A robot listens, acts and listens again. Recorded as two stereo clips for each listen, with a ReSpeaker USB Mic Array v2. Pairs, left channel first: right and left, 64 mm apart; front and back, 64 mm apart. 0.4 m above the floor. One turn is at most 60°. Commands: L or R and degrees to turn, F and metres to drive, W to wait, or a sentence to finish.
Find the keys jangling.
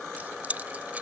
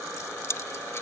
L30
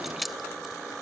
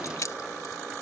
Found it: keys jangling, straight ahead.